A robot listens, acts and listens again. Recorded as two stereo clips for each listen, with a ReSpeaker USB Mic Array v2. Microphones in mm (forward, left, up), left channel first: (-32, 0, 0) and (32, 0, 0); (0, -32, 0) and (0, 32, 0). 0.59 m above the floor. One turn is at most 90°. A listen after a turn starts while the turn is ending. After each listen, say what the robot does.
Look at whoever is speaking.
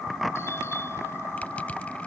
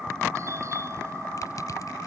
Keep listening.
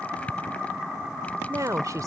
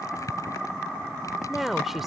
Facing the woman speaking.